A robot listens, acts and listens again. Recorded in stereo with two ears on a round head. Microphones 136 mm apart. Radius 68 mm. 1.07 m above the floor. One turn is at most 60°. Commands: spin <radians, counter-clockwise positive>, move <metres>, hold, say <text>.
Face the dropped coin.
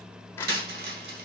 spin -1.05
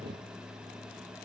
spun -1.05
hold
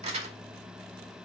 say I heard a dropped coin, but can't make it out now. It was about 10° right or 50° right.